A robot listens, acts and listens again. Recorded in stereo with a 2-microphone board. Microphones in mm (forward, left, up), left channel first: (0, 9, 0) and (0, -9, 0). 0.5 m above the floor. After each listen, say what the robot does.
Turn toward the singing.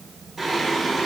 Turn 30° right.
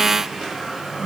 Turn 130° right.
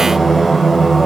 Turn 10° right.
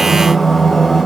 Facing the singing.